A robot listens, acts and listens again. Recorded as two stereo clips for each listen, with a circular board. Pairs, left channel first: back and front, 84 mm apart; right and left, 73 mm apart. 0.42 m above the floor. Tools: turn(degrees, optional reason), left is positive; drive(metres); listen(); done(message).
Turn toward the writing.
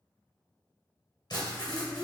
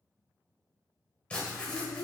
turn(degrees=-160, reason="The writing: 160° right.")
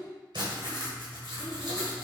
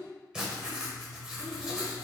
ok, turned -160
turn(degrees=15, reason="The writing is now 15° left.")
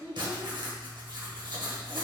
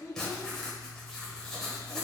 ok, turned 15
done("Found it: writing, straight ahead.")